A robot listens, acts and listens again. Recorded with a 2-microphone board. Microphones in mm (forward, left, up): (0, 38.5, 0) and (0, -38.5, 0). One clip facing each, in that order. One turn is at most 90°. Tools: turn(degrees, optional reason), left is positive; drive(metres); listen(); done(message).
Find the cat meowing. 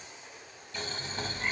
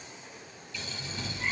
turn(degrees=30)
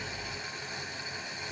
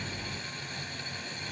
turn(degrees=-30, reason="So it is at 30° right.")
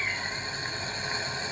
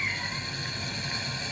turn(degrees=-20, reason="The cat meowing is now 20° right.")
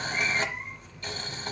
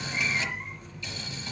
done("Facing the cat meowing, 1 to 2 m away.")